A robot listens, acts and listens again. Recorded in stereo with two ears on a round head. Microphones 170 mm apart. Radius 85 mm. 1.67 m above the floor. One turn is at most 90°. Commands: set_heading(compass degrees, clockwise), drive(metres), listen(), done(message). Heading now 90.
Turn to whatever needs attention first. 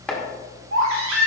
set_heading(180)
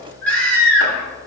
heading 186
set_heading(176)
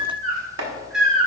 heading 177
done("Facing the baby crying, 2 to 4 m away.")